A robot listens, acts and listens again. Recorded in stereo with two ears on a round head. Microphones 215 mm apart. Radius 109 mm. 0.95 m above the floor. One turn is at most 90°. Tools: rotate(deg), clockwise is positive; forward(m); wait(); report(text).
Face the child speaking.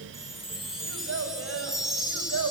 rotate(65)
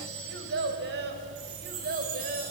rotate(35)
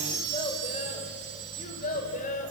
rotate(-30)
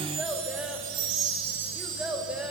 report("Facing the child speaking, 2 to 4 m away.")